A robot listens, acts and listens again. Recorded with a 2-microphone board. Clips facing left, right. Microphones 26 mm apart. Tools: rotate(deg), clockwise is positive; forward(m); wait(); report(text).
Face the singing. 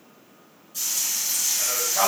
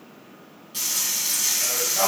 rotate(-25)
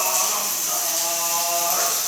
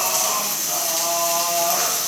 report("Facing the singing, 2 to 4 m away.")